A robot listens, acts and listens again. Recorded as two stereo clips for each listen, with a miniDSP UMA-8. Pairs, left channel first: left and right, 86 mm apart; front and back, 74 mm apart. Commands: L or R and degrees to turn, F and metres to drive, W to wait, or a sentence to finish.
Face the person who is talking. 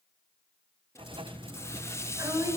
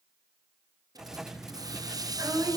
R140
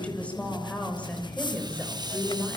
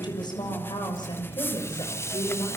L15
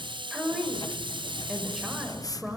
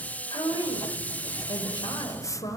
Facing the woman speaking, over 4 m away.